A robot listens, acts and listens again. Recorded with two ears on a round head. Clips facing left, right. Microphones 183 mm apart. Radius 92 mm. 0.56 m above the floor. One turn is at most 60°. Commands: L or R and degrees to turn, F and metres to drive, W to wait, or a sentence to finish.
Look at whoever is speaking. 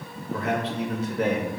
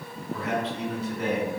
L55
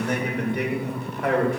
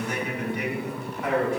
L60
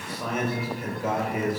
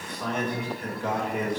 Found it: a man speaking, straight ahead.